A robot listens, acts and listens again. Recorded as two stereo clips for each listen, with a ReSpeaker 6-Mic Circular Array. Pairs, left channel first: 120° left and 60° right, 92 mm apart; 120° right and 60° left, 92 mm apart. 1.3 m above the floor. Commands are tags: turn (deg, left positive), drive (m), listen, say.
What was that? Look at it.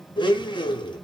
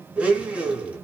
<turn deg="135"/>
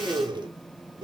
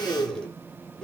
<turn deg="-40"/>
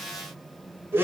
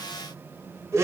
<say>Facing the blender.</say>